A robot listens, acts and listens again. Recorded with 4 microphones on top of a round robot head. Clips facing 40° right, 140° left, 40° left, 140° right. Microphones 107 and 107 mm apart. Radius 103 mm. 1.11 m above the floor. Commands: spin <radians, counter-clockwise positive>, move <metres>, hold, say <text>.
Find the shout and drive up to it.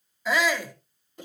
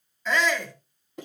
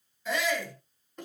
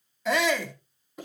spin -2.09
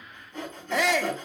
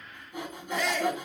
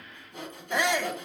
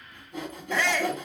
spin -0.61
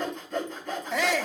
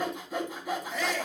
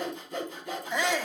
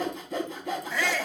spin -0.52
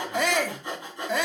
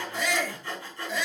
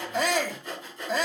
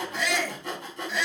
move 1.0
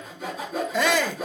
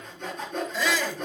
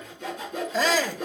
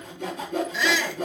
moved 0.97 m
spin -0.17
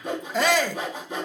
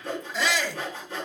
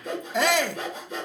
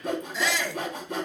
move 1.0
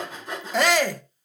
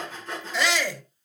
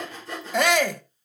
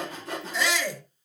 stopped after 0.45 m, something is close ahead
say I am next to the shout.